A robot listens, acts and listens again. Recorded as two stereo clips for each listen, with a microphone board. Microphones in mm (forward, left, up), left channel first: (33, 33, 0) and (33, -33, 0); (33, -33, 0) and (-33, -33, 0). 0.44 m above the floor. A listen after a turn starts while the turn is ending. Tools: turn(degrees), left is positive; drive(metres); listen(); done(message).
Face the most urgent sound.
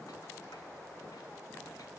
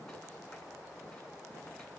listen()
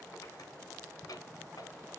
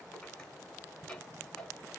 listen()
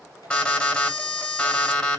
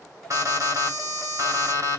turn(degrees=165)
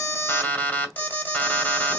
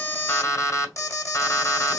turn(degrees=25)
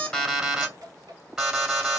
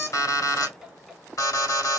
turn(degrees=-10)
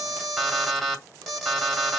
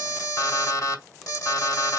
done("Facing the alarm.")